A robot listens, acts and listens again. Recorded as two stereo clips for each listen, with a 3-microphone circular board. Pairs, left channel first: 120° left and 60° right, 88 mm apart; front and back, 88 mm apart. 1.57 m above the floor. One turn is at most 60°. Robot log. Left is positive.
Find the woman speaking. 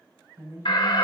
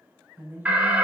note: The woman speaking: 115° right.
cmd yaw -60
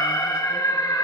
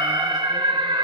note: Nothing new. It was at 55° right.
cmd yaw -55
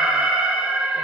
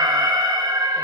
cmd idle
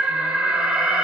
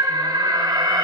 end: I heard a woman speaking from this way, but can't make it out now.